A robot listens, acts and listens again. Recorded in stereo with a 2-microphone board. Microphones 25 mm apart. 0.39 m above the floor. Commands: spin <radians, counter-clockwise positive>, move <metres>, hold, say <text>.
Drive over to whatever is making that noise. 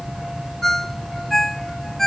spin 0.35
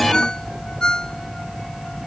spin 2.53
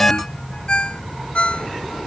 spin 0.79
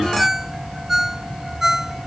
spin -0.26
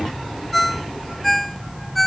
move 1.0
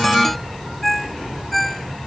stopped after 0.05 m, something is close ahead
say Something is in my way. I am facing the ringtone but have not reached it.